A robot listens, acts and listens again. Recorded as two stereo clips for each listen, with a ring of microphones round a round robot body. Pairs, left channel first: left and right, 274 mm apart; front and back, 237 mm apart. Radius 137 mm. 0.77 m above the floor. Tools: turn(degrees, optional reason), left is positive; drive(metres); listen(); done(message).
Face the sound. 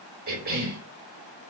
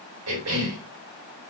turn(degrees=-145, reason="The cough: 145° right.")
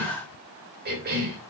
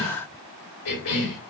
turn(degrees=-35, reason="The cough is now 35° right.")
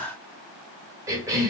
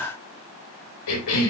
turn(degrees=-10, reason="The cough is now 10° right.")
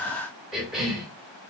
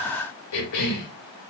done("Facing the cough, 2 to 4 m away.")